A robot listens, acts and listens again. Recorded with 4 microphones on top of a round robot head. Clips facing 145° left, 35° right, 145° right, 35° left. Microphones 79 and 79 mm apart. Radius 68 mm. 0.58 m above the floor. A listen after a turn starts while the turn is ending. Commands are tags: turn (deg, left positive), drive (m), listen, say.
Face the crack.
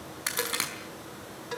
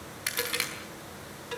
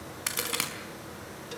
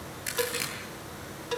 <turn deg="-155"/>
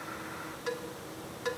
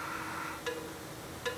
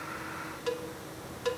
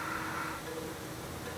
<say>I heard a crack from this way, but can't make it out now.</say>